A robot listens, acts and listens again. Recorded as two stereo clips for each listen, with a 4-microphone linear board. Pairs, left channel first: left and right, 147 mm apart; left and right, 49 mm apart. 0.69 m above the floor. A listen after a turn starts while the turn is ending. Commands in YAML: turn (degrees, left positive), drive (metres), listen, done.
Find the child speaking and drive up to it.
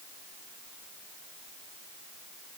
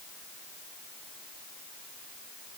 listen: true
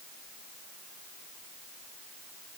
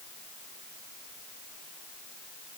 listen: true
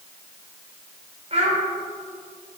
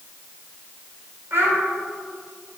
turn: -50
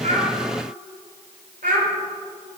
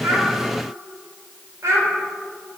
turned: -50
turn: -80
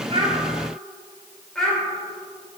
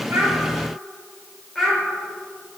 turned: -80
drive: 1.0
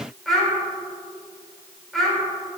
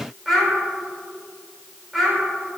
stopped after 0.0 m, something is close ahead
done: "Blocked. The child speaking is further on, straight ahead."